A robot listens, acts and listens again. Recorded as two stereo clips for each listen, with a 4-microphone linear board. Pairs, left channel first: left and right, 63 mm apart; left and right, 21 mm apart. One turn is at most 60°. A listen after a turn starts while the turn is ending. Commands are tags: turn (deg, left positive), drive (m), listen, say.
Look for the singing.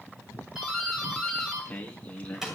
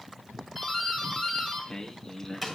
<turn deg="20"/>
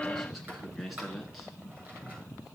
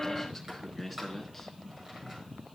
<say>Found it: singing, straight ahead.</say>